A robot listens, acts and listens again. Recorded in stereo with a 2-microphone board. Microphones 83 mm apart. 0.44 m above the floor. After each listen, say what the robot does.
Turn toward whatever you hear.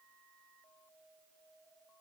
Keep listening.
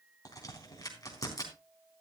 Turn 45° left.
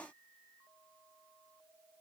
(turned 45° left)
Keep listening.
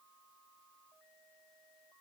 I heard a crack, but can't make it out now. It was about straight ahead or 90° left.